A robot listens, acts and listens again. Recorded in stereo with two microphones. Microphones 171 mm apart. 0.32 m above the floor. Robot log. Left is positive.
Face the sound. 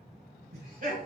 note: The laughter: about 55° right or 125° right.
cmd yaw -55
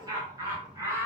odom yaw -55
note: So it is at 15° right.
cmd yaw -15
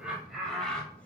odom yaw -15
end: Found it: laughter, straight ahead.